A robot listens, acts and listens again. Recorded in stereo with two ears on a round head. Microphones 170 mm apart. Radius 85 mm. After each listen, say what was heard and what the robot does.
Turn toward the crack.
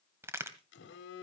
Turn 30° right.
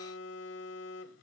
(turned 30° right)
Keep listening.
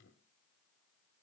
I heard a crack, but can't make it out now. It was about 15° left or 135° right.